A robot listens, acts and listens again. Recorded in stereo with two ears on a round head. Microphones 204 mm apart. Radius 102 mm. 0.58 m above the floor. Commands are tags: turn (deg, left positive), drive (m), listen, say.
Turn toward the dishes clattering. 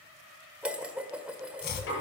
<turn deg="-30"/>
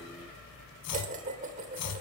<turn deg="-145"/>
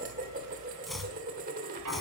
<turn deg="-40"/>
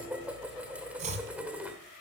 <say>Facing the dishes clattering, 1 to 2 m away.</say>